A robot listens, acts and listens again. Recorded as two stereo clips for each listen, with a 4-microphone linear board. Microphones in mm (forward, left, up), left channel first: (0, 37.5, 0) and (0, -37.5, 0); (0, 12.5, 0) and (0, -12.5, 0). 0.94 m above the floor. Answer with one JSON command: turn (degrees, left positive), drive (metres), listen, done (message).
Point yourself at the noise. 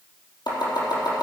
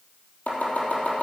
{"turn": 90}
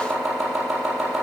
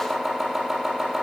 {"done": "Facing the chopping."}